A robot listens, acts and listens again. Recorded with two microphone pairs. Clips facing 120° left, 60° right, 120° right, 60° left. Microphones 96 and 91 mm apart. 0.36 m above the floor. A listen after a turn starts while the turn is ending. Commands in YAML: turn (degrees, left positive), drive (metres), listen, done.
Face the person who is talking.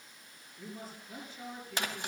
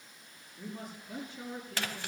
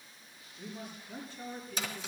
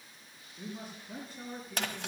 done: "Found it: a man speaking, straight ahead, over 4 m away."